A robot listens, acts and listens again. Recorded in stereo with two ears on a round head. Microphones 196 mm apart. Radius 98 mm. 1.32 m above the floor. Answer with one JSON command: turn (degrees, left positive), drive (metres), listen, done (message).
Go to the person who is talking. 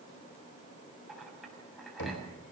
{"listen": true}
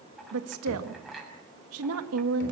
{"turn": -70}
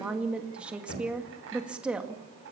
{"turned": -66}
{"drive": 1.0}
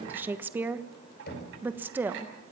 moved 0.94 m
{"turn": -10}
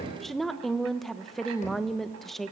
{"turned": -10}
{"drive": 1.0}
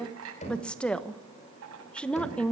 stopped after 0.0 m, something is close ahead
{"done": "Arrived at the woman speaking, straight ahead."}